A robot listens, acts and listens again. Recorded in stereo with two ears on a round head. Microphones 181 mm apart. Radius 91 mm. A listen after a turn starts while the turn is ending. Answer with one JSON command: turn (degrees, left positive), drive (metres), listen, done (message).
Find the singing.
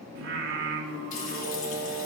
{"turn": -65}
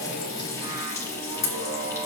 {"turn": -35}
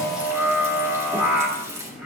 {"done": "Facing the singing, 1 to 2 m away."}